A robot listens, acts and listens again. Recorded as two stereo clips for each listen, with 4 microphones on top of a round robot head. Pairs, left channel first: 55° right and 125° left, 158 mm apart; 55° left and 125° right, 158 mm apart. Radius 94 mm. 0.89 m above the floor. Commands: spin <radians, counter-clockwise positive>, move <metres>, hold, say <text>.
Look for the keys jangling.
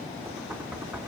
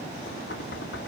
hold
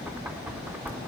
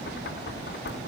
hold
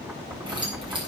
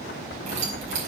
spin -3.05
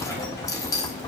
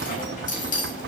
spin 0.26
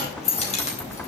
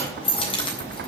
say Facing the keys jangling, 2 to 4 m away.